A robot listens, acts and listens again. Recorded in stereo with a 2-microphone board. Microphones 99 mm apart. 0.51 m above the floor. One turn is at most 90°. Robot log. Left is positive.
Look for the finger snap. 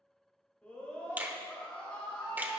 note: The finger snap: about 15° right or 165° right.
cmd yaw -15
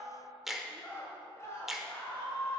end: Facing the finger snap.